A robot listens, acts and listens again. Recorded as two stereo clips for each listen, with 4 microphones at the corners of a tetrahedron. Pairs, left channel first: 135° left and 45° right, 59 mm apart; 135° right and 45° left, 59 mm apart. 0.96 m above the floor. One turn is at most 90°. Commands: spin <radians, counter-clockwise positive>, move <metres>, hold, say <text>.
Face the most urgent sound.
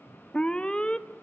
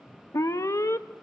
spin -1.57
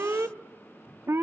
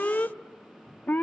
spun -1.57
spin -1.40
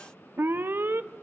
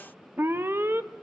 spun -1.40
say Facing the alarm.